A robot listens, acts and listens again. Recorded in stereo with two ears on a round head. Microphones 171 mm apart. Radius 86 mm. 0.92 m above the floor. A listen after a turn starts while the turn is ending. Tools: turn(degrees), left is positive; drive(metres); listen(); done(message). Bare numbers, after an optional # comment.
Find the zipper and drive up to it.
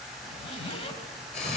# The zipper: about 35° left or 145° left.
turn(35)
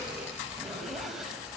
drive(1.0)
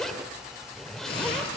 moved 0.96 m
drive(1.0)
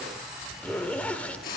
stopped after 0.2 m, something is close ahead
# The zipper is now 10° left.
turn(10)
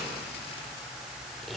done("Arrived at the zipper, straight ahead.")